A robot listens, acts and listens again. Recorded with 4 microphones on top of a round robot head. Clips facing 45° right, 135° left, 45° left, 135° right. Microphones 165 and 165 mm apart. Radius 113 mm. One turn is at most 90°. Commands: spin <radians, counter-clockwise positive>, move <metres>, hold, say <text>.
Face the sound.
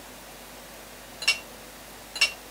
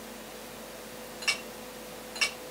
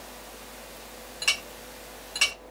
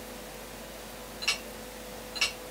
spin 0.26
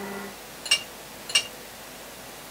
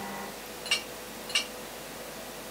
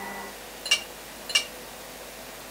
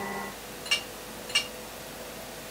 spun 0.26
say Facing the clink, under 1 m away.